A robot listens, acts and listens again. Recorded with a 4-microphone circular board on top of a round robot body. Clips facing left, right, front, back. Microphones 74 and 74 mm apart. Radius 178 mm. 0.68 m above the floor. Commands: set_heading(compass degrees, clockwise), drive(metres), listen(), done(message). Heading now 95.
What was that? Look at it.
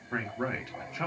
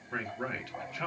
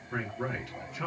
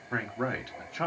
set_heading(295)
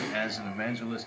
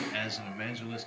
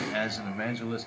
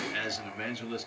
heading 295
set_heading(250)
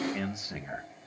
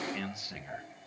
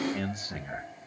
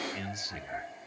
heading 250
set_heading(215)
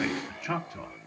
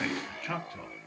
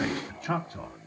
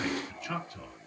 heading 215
set_heading(190)
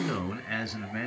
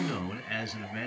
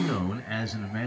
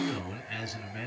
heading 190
set_heading(175)
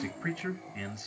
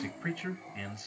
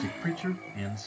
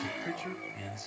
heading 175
done("Found it: a man speaking, straight ahead, 1 to 2 m away.")